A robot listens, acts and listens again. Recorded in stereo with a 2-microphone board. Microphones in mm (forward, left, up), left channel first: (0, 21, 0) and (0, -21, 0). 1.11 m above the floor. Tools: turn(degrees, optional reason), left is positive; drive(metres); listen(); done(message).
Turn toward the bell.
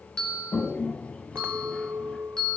turn(degrees=15, reason="The bell: about 15° left or 165° left.")
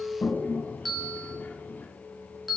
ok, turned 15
done("Found it: a bell, straight ahead, 2 to 4 m away.")